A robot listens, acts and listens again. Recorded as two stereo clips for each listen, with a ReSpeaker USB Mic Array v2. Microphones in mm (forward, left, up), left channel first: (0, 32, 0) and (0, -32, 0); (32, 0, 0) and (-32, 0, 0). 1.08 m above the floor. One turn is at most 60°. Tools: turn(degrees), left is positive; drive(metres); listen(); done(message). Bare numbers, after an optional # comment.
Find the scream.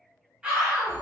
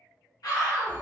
# The scream: 15° right.
turn(-15)
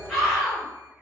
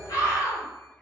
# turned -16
done("Facing the scream, 1 to 2 m away.")